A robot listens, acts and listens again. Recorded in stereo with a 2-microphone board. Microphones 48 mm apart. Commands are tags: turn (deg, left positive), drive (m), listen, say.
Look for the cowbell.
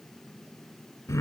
<listen/>
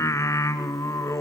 <listen/>
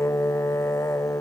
<say>I can't make out a cowbell, only singing.</say>